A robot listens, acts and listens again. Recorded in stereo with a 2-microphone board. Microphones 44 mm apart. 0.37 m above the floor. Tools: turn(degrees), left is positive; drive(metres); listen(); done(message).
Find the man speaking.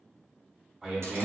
turn(degrees=-30)
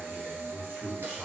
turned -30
turn(degrees=-140)
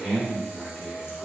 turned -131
turn(degrees=-10)
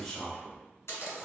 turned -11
done("Facing the man speaking.")